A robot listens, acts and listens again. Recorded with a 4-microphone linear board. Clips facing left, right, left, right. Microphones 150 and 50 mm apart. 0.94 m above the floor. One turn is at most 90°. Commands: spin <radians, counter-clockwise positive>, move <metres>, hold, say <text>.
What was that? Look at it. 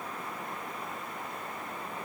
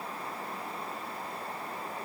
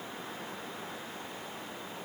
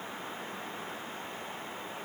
hold
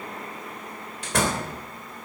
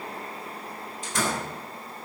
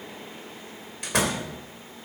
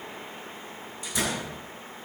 spin 1.57
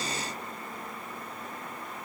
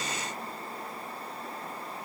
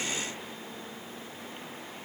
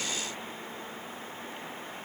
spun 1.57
say Facing where the door slam came from. I can't hear it now.